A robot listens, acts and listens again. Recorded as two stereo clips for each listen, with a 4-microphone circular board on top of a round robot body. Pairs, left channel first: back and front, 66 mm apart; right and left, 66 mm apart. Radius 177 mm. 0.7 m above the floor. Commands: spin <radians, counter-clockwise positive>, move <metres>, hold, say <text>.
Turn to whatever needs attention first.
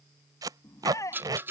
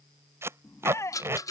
spin -2.44
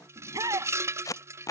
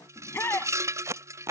spin -0.61
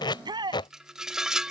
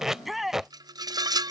say Found it: a shout, straight ahead.